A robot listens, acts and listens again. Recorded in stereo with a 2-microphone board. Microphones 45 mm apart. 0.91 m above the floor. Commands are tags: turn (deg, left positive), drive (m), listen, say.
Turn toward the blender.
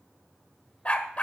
<listen/>
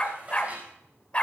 <listen/>
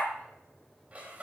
<say>I can't make out a blender to turn to.</say>